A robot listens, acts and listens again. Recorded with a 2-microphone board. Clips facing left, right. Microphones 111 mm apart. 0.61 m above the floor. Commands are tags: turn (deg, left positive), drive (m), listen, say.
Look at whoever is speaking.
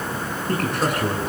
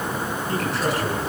<turn deg="55"/>
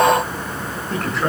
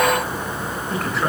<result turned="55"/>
<say>Facing the man speaking, over 4 m away.</say>